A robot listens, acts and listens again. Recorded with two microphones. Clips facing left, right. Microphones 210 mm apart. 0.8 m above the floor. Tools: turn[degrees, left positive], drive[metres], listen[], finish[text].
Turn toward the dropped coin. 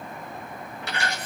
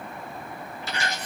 Thought: The dropped coin: about 65° left or 115° left.
Action: turn[65]
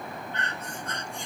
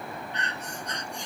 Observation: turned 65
Action: listen[]
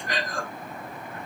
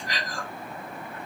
Action: finish[I heard a dropped coin, but can't make it out now. It was about straight ahead or 50° left.]